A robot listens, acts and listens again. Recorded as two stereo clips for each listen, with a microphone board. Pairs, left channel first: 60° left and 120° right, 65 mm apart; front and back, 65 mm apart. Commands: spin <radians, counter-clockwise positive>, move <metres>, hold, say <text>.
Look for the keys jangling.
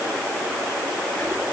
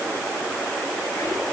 hold
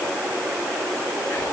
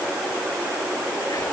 hold
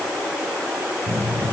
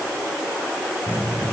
spin -1.05
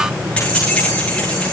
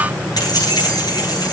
spin -0.26
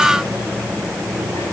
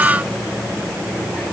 say Facing the keys jangling, over 4 m away.